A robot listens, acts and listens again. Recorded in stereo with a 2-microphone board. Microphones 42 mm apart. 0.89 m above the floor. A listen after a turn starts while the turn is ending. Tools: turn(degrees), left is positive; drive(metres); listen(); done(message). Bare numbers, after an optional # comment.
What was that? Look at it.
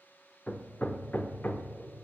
# The hammering: about 35° left or 145° left.
turn(35)
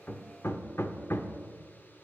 # So it is at 100° left.
turn(100)
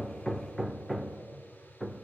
done("Found it: hammering, straight ahead.")